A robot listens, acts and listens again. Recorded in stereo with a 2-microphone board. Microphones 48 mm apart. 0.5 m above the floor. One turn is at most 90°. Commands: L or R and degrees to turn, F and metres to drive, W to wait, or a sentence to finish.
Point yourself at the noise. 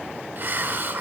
R50
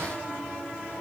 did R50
W
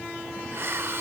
R75
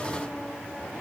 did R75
W
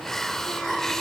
L10
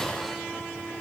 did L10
W
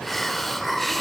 Facing the hiss.